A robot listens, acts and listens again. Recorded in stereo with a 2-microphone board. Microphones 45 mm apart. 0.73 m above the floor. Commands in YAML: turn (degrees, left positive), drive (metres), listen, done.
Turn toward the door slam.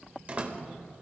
turn: -35
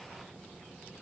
listen: true
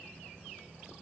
done: "I heard a door slam, but can't make it out now. It was about straight ahead or 110° right."